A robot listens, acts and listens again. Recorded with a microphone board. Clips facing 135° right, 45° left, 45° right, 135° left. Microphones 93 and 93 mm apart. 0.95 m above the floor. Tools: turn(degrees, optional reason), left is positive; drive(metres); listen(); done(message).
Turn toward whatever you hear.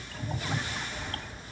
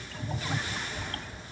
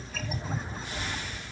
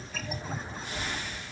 turn(degrees=85, reason="The child speaking: 85° left.")
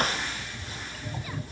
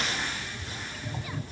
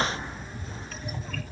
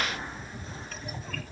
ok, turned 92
turn(degrees=-10, reason="Nothing new. It was at 10° right.")
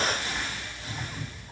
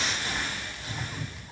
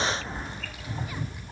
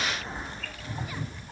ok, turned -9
turn(degrees=35, reason="The child speaking is now 35° left.")
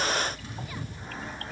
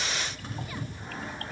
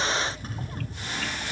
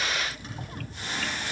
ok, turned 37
listen()
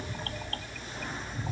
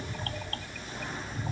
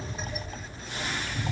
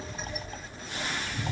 turn(degrees=15, reason="The child speaking is now 15° left.")
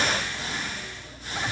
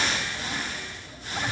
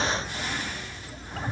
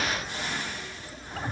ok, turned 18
listen()
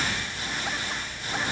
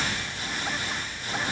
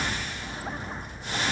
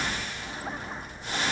done("Facing the child speaking, over 4 m away.")